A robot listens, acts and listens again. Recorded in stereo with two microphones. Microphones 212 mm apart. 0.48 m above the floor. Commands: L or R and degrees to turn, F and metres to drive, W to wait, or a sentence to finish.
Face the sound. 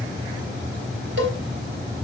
R65
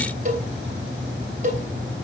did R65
R40
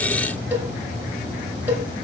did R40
R10
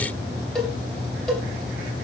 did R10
Facing the cowbell, 2 to 4 m away.